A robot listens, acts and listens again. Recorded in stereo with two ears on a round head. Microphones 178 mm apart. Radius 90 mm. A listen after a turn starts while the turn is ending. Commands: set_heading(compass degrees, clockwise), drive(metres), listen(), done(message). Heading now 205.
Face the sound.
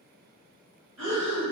set_heading(295)
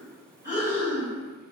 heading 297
set_heading(307)
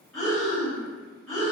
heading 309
done("Facing the breathing, 1 to 2 m away.")